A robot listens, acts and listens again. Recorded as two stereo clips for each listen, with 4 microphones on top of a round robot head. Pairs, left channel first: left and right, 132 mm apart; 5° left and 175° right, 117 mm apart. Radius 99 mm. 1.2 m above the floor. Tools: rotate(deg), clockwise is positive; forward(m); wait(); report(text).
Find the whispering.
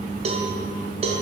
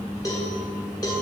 wait()
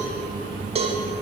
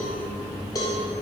wait()
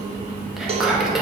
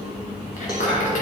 report("Found it: whispering, straight ahead, 2 to 4 m away.")